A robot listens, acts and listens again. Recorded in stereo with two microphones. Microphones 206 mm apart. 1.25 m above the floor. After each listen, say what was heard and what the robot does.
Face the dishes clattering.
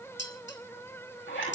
The dishes clattering: about 60° left or 120° left. Turn 60° left.
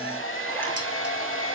Keep listening.
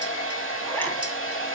Keep listening.
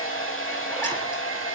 I heard dishes clattering, but can't make it out now. It was about straight ahead or 60° left.